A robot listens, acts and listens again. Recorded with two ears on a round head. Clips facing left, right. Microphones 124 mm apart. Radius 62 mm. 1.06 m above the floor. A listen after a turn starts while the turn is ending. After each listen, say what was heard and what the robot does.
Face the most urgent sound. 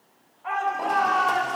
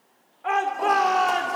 Turn 90° right.
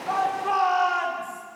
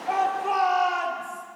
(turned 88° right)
Facing the shout, 2 to 4 m away.